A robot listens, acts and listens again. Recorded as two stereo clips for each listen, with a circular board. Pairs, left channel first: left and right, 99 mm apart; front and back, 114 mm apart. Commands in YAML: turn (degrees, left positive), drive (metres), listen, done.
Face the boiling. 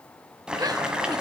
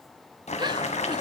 turn: -10
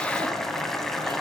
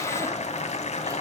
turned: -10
done: "Facing the boiling, 2 to 4 m away."